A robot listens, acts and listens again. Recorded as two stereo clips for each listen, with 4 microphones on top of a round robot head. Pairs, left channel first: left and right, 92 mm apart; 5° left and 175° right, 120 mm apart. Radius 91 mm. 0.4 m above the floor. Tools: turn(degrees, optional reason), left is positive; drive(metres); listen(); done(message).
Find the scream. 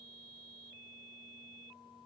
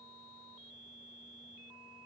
listen()
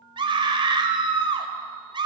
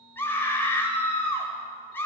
turn(degrees=-70, reason="The scream: 70° right.")
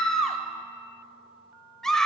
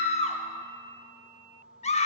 done("Facing the scream, 1 to 2 m away.")